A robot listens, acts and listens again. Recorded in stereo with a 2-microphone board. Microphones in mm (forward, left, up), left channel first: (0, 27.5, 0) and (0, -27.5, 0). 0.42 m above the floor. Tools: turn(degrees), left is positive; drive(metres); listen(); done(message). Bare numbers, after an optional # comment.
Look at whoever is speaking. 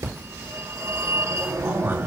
# The man speaking: about 40° right or 140° right.
turn(-40)
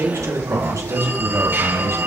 # So it is at 105° right.
turn(-105)
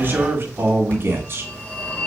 # The man speaking is now 45° right.
turn(-45)
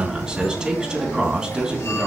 # The man speaking is now 10° right.
turn(-10)
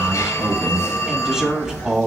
done("Found it: a man speaking, straight ahead.")